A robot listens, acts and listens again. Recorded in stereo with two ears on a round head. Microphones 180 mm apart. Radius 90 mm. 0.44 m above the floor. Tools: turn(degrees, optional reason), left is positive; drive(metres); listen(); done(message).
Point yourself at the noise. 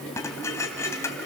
turn(degrees=30)
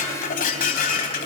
turn(degrees=135, reason="So it is at 135° left.")
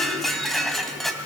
done("Facing the dishes clattering.")